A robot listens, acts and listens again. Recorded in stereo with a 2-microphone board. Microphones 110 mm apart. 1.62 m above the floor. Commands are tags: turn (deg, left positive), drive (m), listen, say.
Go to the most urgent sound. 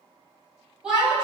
<turn deg="-30"/>
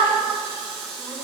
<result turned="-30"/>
<turn deg="-145"/>
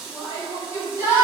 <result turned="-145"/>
<turn deg="30"/>
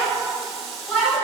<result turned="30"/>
<turn deg="10"/>
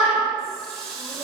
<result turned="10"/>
<drive m="1.0"/>
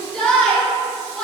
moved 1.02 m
<drive m="1.0"/>
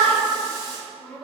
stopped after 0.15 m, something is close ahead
<say>Arrived at the shout, straight ahead.</say>